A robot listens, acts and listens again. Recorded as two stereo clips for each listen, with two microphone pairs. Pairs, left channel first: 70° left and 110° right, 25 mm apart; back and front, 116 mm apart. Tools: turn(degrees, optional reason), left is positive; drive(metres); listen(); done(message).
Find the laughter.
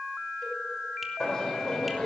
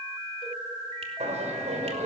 done("Found it: laughter, straight ahead, over 4 m away.")